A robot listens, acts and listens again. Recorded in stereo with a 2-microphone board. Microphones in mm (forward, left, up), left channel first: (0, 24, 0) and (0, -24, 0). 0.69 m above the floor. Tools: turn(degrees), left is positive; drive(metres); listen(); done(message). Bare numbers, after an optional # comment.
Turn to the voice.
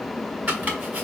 listen()
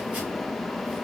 listen()
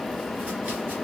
done("I can't make out anyone speaking, only chopping.")